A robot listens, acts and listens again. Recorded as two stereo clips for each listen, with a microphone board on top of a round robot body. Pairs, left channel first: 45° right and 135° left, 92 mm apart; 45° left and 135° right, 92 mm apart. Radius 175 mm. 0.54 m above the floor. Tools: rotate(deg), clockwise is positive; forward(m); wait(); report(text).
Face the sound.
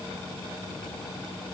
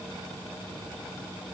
wait()
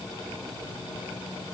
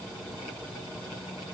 wait()
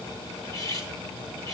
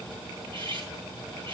rotate(100)
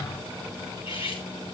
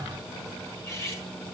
rotate(20)
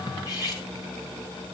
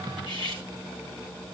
report("Found it: cutlery clinking, straight ahead, over 4 m away.")